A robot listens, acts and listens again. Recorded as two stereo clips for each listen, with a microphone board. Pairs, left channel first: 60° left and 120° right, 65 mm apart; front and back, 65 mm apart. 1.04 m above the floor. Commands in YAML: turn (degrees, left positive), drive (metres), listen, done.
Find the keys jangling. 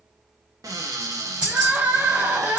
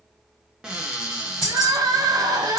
turn: -45
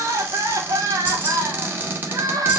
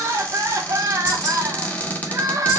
listen: true
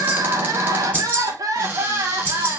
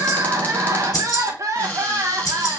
done: "Found it: keys jangling, straight ahead."